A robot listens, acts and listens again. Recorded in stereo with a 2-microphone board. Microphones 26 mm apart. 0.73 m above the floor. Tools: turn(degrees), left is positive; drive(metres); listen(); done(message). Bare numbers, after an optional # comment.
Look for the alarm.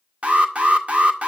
# The alarm: about 50° right or 130° right.
turn(-50)
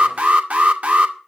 # So it is at 75° right.
turn(-75)
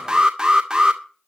# The alarm is now 30° right.
turn(-30)
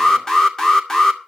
# The alarm is now 15° left.
turn(15)
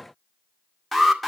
done("Found it: an alarm, straight ahead.")